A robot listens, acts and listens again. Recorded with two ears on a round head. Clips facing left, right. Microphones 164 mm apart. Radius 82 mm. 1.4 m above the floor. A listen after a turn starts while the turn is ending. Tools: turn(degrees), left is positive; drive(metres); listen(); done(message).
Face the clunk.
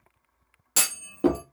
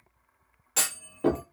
turn(degrees=50)
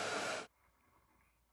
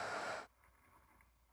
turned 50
listen()
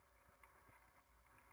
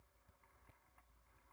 done("I heard a clunk, but can't make it out now. It was about straight ahead or 80° left.")